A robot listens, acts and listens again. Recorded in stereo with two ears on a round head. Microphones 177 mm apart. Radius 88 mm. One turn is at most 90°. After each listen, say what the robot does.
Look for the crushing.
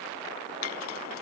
Turn 90° left.
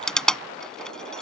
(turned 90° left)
Facing the crushing.